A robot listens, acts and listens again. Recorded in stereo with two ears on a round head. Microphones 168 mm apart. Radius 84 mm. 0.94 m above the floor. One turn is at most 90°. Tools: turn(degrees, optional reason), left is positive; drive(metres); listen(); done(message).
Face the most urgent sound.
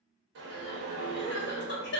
turn(degrees=65, reason="The crying: about 65° left or 115° left.")
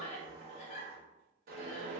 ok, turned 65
turn(degrees=40, reason="So it is at 40° left.")
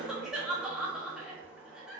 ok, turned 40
done("Facing the crying.")